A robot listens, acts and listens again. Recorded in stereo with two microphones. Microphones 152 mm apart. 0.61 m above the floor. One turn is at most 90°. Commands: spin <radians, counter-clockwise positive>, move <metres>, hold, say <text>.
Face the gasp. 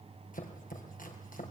hold
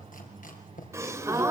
spin -0.35
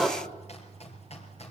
say Found it: a gasp, straight ahead, 2 to 4 m away.